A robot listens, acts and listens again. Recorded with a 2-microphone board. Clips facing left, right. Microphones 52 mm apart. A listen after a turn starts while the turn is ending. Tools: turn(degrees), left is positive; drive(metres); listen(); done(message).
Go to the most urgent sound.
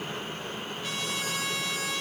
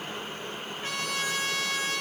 listen()
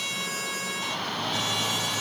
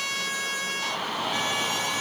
turn(degrees=-30)
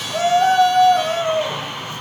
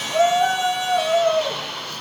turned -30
turn(degrees=20)
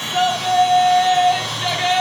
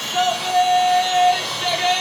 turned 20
drive(metres=1.0)
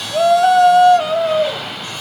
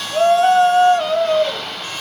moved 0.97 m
drive(metres=1.0)
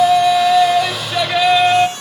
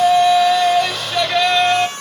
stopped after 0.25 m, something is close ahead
done("I am next to the shout.")